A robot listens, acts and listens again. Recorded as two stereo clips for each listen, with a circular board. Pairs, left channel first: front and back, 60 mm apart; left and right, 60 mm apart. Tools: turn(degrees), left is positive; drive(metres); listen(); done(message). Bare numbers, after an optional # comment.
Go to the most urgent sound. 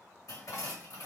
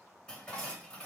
listen()
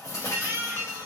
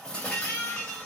# The baby crying: 125° left.
turn(125)
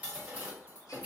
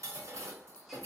listen()
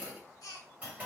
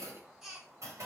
# The baby crying is now 10° right.
turn(-10)
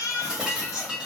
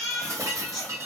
drive(1.0)
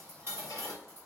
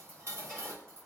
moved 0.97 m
listen()
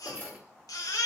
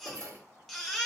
drive(1.0)
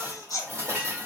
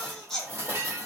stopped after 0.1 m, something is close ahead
done("I am next to the baby crying.")